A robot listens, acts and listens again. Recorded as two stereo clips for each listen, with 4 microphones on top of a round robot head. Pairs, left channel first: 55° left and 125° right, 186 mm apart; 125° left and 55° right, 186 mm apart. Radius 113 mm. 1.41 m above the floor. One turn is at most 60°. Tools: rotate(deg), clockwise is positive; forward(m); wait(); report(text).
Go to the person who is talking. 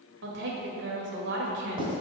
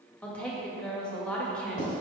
rotate(60)
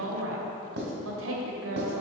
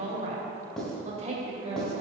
rotate(60)
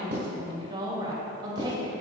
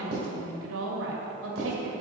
rotate(55)
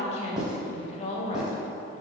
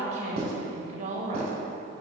forward(1.0)
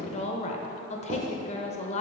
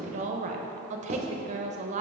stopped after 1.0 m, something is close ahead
report("I am next to the woman speaking.")